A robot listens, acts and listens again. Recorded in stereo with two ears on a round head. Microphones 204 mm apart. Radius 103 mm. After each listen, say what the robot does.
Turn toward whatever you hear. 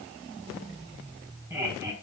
Turn 30° right.
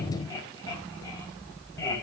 Turn 15° left.
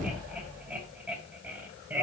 Turn 10° right.
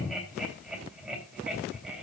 Found it: laughter, straight ahead.